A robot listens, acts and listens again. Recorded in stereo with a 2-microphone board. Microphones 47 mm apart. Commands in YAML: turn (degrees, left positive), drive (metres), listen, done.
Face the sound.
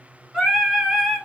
turn: 30
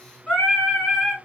turn: 150
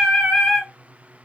turn: -10
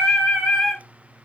done: "Facing the singing."